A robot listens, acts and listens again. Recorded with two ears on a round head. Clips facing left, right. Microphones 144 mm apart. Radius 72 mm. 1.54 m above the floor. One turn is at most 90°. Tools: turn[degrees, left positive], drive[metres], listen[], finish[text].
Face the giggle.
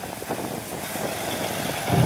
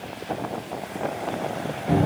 Action: listen[]
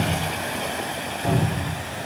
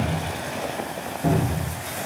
Action: listen[]
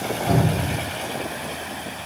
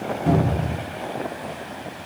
Action: finish[I can't make out a giggle to turn to.]